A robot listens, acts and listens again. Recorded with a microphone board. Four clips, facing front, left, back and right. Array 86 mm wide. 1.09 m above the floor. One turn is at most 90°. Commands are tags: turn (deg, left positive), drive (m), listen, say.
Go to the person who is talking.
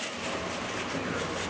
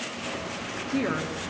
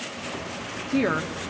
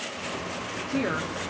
<turn deg="90"/>
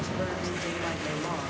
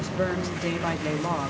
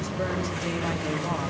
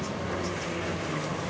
<turn deg="90"/>
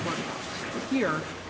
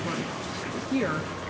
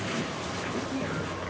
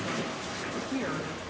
<turn deg="25"/>
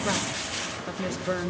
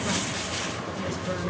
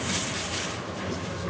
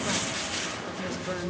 <drive m="1.0"/>
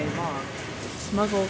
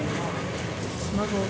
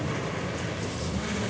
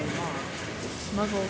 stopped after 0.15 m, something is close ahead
<say>Something is in my way. I am facing the woman speaking but have not reached it.</say>